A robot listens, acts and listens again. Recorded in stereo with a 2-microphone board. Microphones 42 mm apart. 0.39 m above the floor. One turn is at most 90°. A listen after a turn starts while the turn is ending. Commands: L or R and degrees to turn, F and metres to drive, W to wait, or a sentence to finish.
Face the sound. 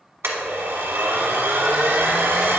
R75
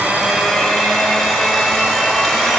Found it: a blender, straight ahead.